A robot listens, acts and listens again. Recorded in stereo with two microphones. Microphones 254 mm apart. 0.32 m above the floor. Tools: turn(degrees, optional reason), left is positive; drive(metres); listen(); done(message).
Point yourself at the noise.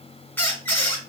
turn(degrees=30)
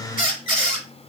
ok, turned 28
turn(degrees=-20, reason="So it is at 20° right.")
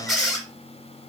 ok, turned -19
done("Found it: a squeak, straight ahead, 1 to 2 m away.")